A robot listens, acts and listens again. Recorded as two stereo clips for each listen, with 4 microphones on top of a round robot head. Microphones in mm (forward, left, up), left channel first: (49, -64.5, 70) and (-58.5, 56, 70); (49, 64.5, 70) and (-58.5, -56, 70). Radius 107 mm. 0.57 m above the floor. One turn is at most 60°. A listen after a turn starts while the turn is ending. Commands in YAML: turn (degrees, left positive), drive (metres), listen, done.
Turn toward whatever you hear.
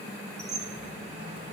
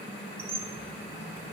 turn: 60
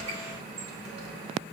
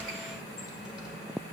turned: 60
turn: 60
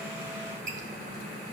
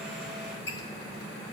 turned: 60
turn: 60
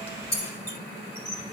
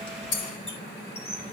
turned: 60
turn: -10
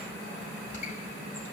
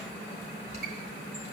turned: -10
done: "Found it: a squeak, straight ahead."